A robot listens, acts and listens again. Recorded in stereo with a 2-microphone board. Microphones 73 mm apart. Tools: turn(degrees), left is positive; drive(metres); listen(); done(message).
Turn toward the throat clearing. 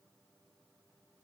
listen()
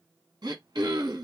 turn(degrees=-65)
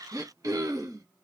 turn(degrees=-50)
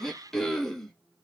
done("Found it: throat clearing, straight ahead, 1 to 2 m away.")